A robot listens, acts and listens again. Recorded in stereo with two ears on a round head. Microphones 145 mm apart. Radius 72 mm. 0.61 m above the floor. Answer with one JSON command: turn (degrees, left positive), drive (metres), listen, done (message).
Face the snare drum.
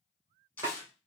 {"turn": -20}
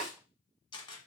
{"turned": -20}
{"done": "Found it: a snare drum, straight ahead, 2 to 4 m away."}